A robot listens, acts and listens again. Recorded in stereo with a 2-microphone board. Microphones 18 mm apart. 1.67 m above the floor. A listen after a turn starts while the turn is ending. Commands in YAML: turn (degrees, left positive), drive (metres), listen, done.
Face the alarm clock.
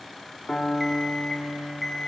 turn: 30
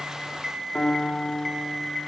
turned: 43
turn: -30
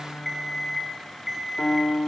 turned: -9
turn: -20
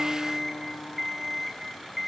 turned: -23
done: "Found it: an alarm clock, straight ahead, over 4 m away."